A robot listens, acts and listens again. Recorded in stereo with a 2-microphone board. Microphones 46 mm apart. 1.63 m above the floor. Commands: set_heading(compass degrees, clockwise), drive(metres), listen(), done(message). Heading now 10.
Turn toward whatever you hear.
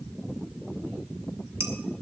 set_heading(80)
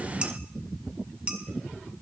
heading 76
set_heading(101)
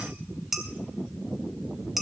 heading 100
done("Found it: dishes clattering, straight ahead, 1 to 2 m away.")